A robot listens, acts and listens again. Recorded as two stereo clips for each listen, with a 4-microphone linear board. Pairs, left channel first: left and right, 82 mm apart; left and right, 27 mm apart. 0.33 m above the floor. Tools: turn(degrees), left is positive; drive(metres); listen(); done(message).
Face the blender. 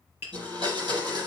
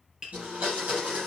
turn(degrees=-65)
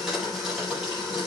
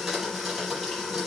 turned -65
done("Facing the blender, over 4 m away.")